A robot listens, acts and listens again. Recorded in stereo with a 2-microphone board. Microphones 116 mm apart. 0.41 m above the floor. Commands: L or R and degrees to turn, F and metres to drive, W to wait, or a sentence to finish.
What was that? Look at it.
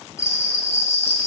L25
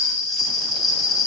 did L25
Facing the bell, 2 to 4 m away.